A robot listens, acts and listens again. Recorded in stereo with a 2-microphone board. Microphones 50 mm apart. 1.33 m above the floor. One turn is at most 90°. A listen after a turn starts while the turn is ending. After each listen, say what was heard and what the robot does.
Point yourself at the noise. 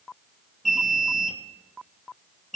Turn 30° left.
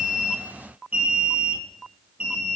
So it is at 30° right. Turn 30° right.
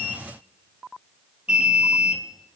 The alarm is now 20° right. Turn 20° right.
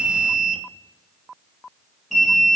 Facing the alarm, 2 to 4 m away.